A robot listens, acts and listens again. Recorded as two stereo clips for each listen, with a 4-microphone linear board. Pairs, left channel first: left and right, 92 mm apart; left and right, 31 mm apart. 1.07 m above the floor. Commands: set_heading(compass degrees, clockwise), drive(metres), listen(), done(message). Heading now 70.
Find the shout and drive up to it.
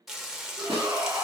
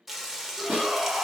set_heading(110)
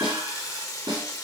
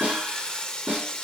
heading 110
listen()
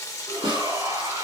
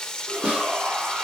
set_heading(210)
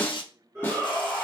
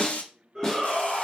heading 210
set_heading(230)
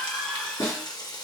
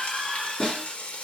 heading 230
drive(1.0)
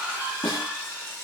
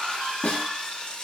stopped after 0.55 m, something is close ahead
set_heading(240)
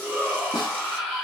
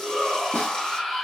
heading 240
done("Something is in my way. I am facing the shout but have not reached it.")